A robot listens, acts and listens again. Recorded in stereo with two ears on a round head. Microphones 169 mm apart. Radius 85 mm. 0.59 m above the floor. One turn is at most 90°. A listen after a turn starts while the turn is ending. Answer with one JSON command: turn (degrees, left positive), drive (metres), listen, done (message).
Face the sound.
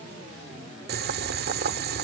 {"turn": -55}
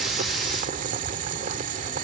{"turn": -50}
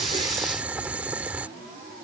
{"turn": -10}
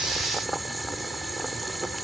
{"done": "Found it: boiling, straight ahead."}